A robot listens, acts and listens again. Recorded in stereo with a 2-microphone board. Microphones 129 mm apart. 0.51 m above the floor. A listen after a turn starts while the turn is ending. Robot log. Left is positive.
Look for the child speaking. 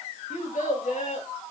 cmd yaw +90
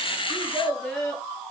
end: Facing the child speaking.